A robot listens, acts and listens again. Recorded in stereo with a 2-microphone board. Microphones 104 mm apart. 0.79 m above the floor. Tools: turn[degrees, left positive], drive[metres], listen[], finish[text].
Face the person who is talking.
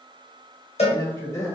Thought: The man speaking: about 25° left or 155° left.
Action: turn[25]
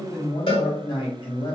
Thought: So it is at 130° left.
Action: turn[130]
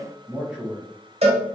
Action: finish[Found it: a man speaking, straight ahead, 1 to 2 m away.]